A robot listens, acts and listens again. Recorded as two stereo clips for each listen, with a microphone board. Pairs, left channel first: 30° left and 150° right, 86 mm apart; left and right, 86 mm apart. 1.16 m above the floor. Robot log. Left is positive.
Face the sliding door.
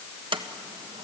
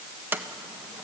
note: The sliding door: 155° right.
cmd yaw -155
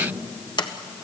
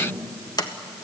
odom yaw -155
note: The sliding door is now 55° left.
cmd yaw +55
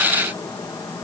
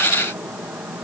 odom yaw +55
cmd idle
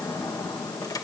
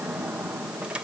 cmd idle
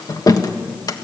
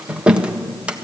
note: The sliding door is now 15° right.
cmd yaw -15
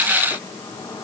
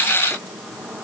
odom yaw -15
cmd idle
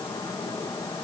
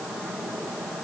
cmd idle
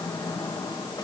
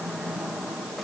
end: Facing where the sliding door came from. I can't hear it now.